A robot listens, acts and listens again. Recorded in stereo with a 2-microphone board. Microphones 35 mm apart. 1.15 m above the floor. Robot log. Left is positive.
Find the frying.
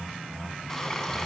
cmd yaw +30
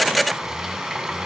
note: So it is at 15° right.
cmd yaw -15
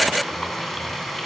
end: Facing the frying.